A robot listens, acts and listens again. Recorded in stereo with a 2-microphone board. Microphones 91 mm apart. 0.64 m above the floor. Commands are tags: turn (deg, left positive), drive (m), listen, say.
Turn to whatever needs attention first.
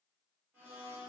<listen/>
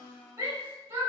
<turn deg="-40"/>
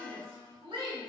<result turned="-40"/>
<turn deg="-90"/>
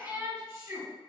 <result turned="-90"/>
<turn deg="-25"/>
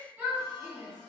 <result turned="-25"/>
<say>Found it: a shout, straight ahead, 1 to 2 m away.</say>